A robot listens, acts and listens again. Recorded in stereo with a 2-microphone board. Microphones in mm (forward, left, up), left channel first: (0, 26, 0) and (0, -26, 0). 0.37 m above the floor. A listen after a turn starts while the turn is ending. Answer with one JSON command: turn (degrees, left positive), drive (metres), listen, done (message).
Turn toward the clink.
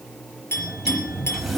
{"turn": 50}
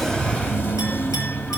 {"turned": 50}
{"listen": true}
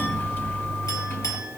{"listen": true}
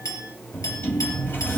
{"turn": 80}
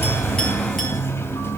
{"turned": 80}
{"listen": true}
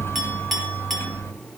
{"done": "Found it: a clink, straight ahead."}